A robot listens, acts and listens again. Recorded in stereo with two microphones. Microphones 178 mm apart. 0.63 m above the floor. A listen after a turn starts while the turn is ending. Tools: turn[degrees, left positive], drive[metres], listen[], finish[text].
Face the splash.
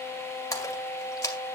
Thought: The splash: about 20° left or 160° left.
Action: turn[20]
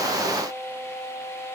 Action: listen[]
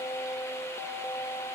Action: finish[I heard a splash, but can't make it out now. It was about straight ahead or 140° left.]